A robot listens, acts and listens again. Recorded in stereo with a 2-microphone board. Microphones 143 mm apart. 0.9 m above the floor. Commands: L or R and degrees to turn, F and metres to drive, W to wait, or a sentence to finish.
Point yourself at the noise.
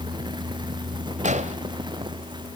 R55
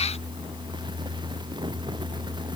W
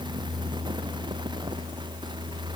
I heard an explosion, but can't make it out now. It was about straight ahead or 70° right.